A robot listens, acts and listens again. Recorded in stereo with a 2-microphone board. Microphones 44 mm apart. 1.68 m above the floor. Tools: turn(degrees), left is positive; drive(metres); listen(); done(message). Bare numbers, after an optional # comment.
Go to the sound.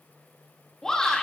turn(30)
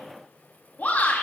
# So it is at 140° left.
turn(140)
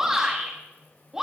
# The shout is now 10° right.
turn(-10)
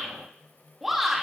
drive(1.0)
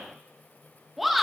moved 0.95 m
drive(1.0)
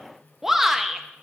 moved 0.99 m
drive(1.0)
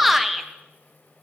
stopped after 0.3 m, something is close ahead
done("I am next to the shout.")